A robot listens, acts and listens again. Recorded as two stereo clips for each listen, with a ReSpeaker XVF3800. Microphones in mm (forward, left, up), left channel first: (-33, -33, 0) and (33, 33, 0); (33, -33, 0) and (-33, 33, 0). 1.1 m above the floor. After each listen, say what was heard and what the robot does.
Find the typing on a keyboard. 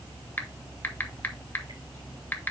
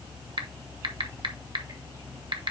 The typing on a keyboard: 155° left. Turn 155° left.
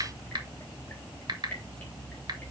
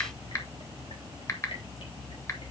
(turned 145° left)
The typing on a keyboard is now 10° left. Turn 10° left.
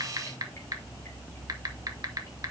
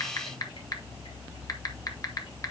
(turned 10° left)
Facing the typing on a keyboard.